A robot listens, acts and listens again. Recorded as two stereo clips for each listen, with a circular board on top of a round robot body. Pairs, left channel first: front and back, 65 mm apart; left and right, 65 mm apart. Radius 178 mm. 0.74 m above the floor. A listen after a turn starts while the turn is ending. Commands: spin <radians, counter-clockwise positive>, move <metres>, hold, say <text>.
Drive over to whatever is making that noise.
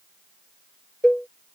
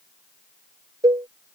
spin -1.40
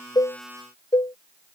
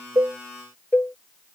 spin 0.44
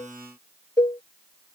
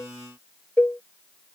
spin 0.35
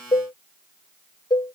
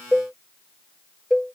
move 1.0
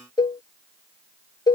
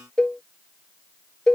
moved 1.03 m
spin 0.17
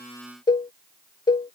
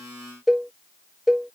move 1.0
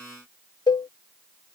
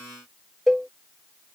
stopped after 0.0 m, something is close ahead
say I am next to the cowbell.